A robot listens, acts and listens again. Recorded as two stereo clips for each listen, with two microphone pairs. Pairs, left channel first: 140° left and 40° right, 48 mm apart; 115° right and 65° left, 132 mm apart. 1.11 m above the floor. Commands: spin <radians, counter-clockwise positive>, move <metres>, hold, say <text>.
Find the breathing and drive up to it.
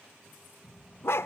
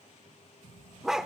spin -1.57
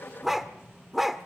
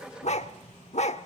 move 1.0
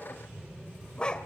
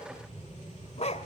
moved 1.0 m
move 1.0
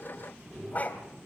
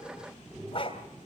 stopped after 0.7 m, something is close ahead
say Arrived at the breathing, straight ahead.